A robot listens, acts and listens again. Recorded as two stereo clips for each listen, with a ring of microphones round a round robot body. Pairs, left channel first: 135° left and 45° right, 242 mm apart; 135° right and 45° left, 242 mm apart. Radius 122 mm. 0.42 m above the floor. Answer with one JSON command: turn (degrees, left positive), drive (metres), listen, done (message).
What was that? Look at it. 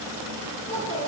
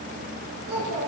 {"turn": 75}
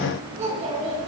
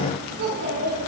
{"turn": 20}
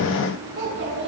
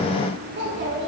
{"done": "Found it: a child speaking, straight ahead."}